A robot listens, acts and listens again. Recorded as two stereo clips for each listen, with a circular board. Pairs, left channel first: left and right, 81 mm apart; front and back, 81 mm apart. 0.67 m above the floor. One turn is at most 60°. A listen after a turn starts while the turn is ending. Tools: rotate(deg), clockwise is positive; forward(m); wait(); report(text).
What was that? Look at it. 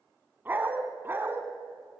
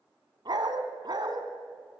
rotate(60)
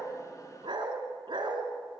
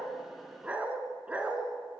rotate(60)
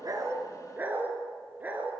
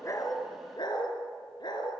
rotate(20)
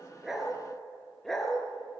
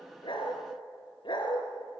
report("Facing the dog barking.")